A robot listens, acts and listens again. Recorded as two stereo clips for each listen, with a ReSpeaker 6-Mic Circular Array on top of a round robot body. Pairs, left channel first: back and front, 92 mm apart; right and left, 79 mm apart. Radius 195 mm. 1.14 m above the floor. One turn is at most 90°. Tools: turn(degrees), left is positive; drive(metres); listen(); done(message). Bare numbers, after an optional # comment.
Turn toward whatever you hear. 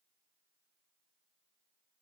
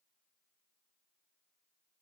listen()
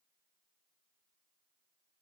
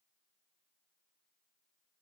listen()
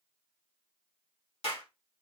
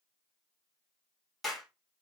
# The clap: straight behind.
turn(90)
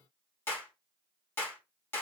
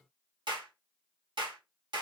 # The clap is now 115° left.
turn(90)
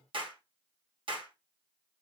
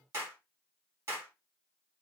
# The clap is now 30° left.
turn(30)
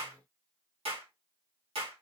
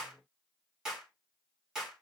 done("Found it: a clap, straight ahead, 1 to 2 m away.")